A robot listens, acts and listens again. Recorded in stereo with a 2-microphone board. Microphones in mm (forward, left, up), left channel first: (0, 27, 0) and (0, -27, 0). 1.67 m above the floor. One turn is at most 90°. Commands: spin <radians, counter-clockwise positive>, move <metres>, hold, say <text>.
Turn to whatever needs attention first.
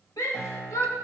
spin 1.57
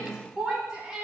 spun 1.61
spin -0.17
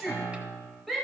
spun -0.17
say Found it: a shout, straight ahead.